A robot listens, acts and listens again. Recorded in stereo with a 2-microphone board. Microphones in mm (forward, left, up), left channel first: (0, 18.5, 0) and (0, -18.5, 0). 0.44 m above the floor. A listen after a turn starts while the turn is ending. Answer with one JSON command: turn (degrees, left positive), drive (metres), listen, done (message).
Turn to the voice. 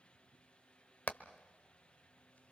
{"listen": true}
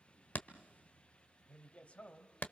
{"turn": 40}
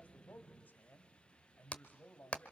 {"turn": 95}
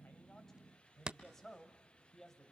{"turn": 15}
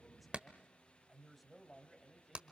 {"done": "Found it: a man speaking, straight ahead."}